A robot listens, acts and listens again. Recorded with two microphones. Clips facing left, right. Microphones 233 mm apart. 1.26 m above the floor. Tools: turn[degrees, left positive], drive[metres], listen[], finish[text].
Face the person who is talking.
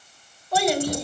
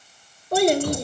Thought: The child speaking: about 55° right or 125° right.
Action: turn[-55]
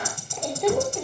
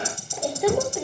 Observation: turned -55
Thought: So it is at 10° right.
Action: turn[-10]
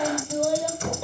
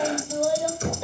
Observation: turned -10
Action: finish[Found it: a child speaking, straight ahead.]